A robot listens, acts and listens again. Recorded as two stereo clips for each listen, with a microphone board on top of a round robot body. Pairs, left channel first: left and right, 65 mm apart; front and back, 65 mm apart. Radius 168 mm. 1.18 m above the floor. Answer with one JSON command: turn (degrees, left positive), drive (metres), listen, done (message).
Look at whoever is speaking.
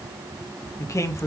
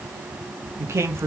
{"turn": 130}
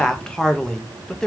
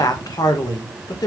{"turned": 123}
{"turn": 10}
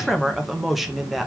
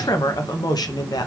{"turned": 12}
{"done": "Found it: a man speaking, straight ahead, 1 to 2 m away."}